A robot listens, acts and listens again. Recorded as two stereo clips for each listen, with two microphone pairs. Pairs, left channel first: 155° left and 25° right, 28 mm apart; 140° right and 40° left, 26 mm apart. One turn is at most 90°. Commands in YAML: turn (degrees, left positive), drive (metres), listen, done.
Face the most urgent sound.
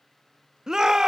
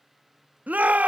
turn: 45
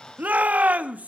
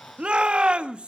turn: -10
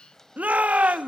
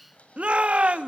done: "Facing the shout, 1 to 2 m away."